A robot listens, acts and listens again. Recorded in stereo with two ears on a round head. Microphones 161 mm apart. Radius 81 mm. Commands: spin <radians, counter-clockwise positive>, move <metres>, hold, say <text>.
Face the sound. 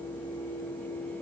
hold
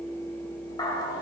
spin 0.35
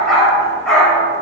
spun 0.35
say Facing the dog barking.